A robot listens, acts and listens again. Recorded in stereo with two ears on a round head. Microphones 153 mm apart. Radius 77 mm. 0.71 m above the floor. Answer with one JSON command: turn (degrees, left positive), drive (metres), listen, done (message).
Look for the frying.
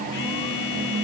{"listen": true}
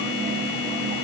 {"listen": true}
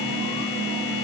{"done": "I can't make out frying to turn to."}